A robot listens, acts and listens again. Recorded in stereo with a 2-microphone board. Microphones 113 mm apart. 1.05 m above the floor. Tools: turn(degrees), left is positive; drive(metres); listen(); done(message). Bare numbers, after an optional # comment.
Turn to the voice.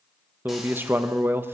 # The man speaking: about 20° right or 160° right.
turn(-20)
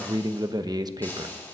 # So it is at 140° right.
turn(-140)
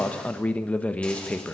# The man speaking is now 15° left.
turn(15)
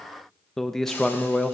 done("Facing the man speaking, under 1 m away.")